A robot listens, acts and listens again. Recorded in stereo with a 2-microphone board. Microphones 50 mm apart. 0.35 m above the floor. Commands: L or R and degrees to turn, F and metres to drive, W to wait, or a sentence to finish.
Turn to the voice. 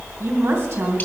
R60
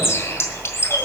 W
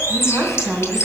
R15
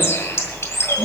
W
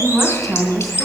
Facing the woman speaking.